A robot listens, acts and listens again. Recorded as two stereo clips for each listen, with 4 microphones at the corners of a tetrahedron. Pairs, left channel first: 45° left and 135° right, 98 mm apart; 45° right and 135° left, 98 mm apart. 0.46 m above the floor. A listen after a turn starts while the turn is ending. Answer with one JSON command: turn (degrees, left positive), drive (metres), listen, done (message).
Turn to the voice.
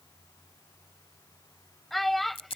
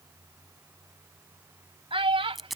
{"turn": 135}
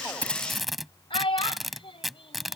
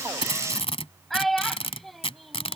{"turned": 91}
{"turn": 40}
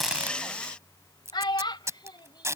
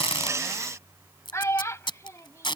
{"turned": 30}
{"turn": 10}
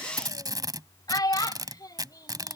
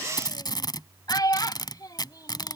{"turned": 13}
{"done": "Found it: a child speaking, straight ahead."}